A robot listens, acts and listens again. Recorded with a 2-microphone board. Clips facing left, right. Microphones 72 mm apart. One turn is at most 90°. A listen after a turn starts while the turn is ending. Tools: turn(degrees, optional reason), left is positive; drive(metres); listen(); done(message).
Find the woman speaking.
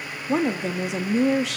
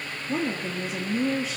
turn(degrees=65, reason="The woman speaking: about 65° left or 115° left.")
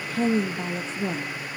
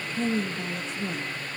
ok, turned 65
turn(degrees=40, reason="So it is at 40° left.")
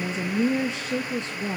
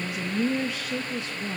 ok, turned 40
turn(degrees=35, reason="The woman speaking is now 35° left.")
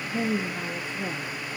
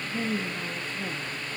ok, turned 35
turn(degrees=25, reason="The woman speaking is now 25° left.")
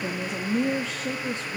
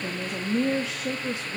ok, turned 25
turn(degrees=-10, reason="The woman speaking is now 10° right.")
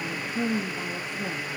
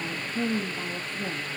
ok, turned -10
done("Facing the woman speaking, 1 to 2 m away.")